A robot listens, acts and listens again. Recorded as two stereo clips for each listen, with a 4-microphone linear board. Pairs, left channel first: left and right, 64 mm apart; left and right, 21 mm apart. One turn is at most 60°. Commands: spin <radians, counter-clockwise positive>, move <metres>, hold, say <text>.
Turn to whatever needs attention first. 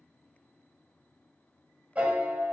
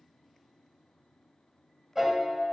hold
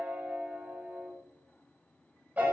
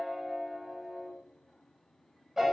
hold
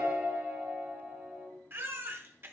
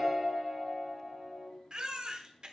spin -0.70
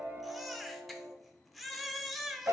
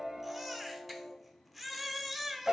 say Facing the baby crying.